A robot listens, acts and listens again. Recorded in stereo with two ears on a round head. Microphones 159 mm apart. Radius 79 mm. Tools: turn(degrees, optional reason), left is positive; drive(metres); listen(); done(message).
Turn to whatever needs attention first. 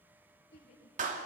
turn(degrees=65, reason="The shout: about 65° left or 115° left.")
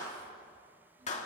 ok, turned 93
listen()
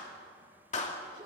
listen()
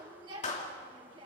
turn(degrees=-30, reason="So it is at 30° right.")
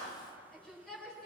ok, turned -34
done("Found it: a shout, straight ahead.")